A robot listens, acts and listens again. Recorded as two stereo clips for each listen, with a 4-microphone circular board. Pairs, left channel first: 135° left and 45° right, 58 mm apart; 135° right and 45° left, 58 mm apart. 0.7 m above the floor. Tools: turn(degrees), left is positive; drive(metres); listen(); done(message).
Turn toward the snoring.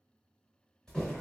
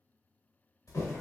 listen()
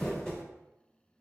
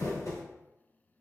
listen()
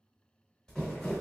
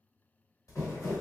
done("I can't make out snoring, only crumpling.")